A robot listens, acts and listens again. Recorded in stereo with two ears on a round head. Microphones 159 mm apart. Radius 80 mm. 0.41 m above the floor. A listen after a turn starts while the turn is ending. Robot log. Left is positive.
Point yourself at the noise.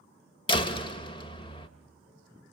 note: The door slam: about 30° left or 150° left.
cmd yaw +30
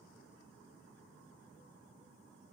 cmd idle
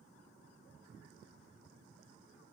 end: I heard a door slam, but can't make it out now. It was about straight ahead or 120° left.